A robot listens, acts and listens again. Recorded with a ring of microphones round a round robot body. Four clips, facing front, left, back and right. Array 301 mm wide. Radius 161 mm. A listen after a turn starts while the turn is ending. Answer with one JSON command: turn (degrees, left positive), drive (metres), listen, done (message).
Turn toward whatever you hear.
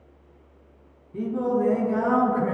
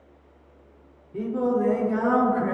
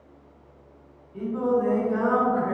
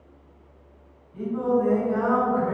{"turn": 35}
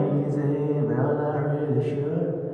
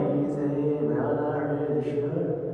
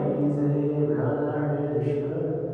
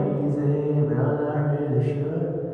{"turn": -30}
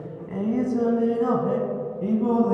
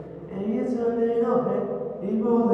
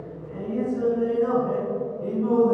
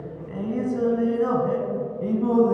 {"turn": -35}
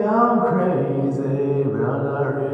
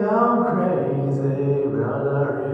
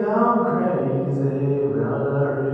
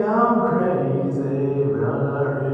{"done": "Facing the singing, 1 to 2 m away."}